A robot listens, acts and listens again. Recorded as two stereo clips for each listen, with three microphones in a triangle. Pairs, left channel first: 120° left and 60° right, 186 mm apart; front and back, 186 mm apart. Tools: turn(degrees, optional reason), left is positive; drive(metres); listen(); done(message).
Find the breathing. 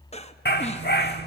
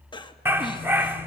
turn(degrees=65, reason="The breathing: 65° left.")
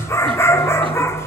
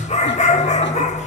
listen()
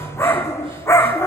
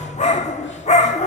listen()
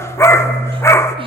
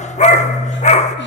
done("Facing where the breathing came from. I can't hear it now.")